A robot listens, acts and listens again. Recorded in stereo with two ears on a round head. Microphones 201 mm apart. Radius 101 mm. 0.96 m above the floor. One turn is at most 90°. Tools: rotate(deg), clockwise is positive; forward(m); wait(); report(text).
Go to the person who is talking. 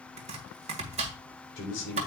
rotate(-55)
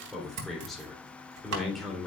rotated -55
forward(1.0)
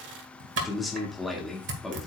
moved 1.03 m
forward(1.0)
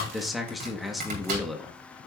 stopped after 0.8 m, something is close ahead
report("I am next to the man speaking.")